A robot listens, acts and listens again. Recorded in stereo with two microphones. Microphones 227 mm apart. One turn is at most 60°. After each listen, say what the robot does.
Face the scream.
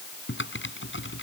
Keep listening.
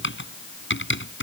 Keep listening.
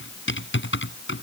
I can't make out a scream, only typing on a keyboard.